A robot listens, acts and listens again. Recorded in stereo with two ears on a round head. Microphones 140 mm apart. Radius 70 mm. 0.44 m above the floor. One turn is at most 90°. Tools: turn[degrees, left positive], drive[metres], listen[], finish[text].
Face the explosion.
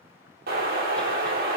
Thought: The explosion: about 65° right or 115° right.
Action: turn[-65]
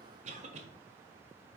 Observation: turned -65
Action: listen[]
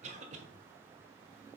Action: finish[I heard an explosion, but can't make it out now. It was about straight ahead or 50° right.]